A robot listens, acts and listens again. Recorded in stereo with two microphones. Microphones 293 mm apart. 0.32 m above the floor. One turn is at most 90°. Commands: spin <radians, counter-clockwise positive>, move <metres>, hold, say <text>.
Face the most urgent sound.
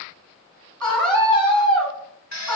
spin 0.52
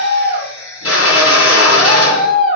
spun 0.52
spin 1.57
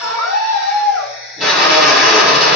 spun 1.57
spin 1.48
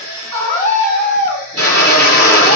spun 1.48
spin 0.44
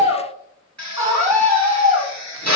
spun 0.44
spin -0.17
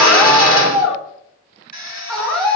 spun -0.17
say Found it: a scream, straight ahead, 2 to 4 m away.